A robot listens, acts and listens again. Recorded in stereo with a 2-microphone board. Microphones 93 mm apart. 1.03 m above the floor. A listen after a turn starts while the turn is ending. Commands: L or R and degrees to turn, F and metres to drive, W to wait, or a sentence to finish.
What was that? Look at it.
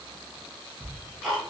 L30
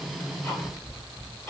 L150
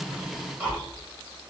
R15
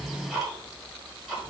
Found it: ticking, straight ahead, 1 to 2 m away.